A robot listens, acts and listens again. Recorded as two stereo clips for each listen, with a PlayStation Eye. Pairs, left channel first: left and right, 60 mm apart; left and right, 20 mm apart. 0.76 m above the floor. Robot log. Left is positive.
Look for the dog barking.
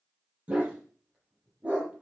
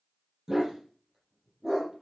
note: The dog barking: about 20° right or 160° right.
cmd yaw -20
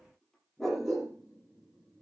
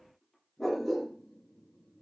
end: Facing the dog barking, over 4 m away.